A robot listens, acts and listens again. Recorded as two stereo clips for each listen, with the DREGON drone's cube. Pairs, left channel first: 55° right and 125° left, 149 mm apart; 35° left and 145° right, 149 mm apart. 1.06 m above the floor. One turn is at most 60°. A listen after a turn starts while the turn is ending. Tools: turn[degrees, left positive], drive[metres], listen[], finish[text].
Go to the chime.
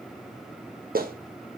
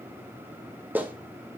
Action: listen[]
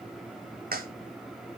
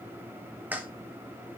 Action: listen[]
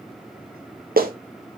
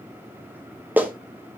Action: finish[I can't make out a chime to turn to.]